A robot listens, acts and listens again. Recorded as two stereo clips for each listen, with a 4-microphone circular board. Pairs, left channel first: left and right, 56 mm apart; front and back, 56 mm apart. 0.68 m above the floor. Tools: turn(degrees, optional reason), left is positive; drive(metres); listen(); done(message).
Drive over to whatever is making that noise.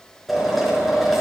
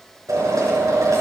turn(degrees=180, reason="The drill: straight behind.")
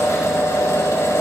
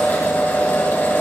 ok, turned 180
turn(degrees=55, reason="The drill is now 55° left.")
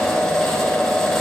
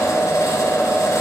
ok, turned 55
drive(metres=1.0)
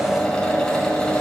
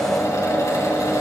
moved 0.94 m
turn(degrees=10, reason="The drill is now 10° left.")
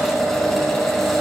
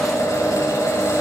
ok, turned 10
drive(metres=1.0)
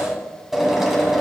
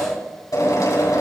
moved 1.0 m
drive(metres=1.0)
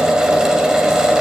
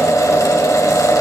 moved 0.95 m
turn(degrees=-15, reason="The drill is now 15° right.")
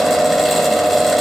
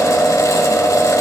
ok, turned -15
drive(metres=1.0)
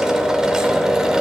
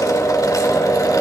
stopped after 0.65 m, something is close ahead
turn(degrees=-15, reason="The drill is now 15° right.")
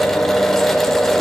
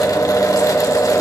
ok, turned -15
done("Arrived at the drill, straight ahead.")